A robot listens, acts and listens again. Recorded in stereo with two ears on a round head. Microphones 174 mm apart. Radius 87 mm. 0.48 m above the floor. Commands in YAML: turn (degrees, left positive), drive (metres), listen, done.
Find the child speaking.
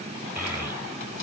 turn: -30
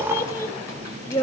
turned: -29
turn: 20
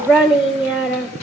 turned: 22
done: "Facing the child speaking, under 1 m away."